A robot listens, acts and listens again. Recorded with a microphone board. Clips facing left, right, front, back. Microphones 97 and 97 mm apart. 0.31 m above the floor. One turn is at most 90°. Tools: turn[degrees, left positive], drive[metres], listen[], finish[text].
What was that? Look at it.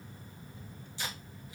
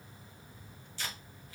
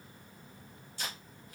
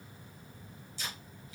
Thought: The tape being pulled: 20° left.
Action: turn[20]
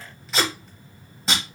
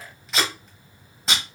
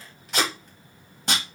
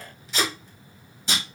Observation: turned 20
Action: finish[Facing the tape being pulled, under 1 m away.]